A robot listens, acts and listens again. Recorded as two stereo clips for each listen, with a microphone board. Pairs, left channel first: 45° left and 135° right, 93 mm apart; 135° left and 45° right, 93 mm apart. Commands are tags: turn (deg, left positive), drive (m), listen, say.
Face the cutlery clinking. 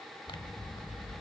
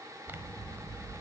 <listen/>
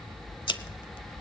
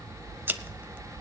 <listen/>
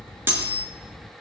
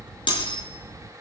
<turn deg="160"/>
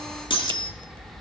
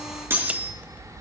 <turn deg="20"/>
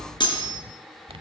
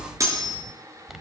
<say>Found it: cutlery clinking, straight ahead, over 4 m away.</say>